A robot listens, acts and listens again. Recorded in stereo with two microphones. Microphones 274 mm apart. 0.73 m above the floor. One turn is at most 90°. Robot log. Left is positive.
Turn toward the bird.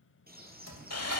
note: The bird: about 35° right or 145° right.
cmd yaw -35
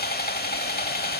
cmd idle
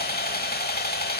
cmd idle
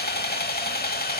end: I heard a bird, but can't make it out now. It was about straight ahead or 110° right.